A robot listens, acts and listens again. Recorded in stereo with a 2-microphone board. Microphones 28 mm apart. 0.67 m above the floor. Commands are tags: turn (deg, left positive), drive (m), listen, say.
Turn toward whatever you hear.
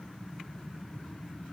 <listen/>
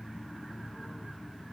<listen/>
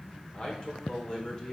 <turn deg="15"/>
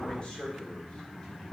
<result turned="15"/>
<turn deg="25"/>
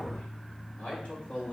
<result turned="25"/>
<turn deg="140"/>
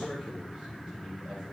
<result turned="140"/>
<turn deg="-25"/>
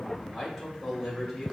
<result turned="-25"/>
<turn deg="-10"/>
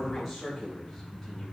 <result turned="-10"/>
<say>Facing the man speaking, 2 to 4 m away.</say>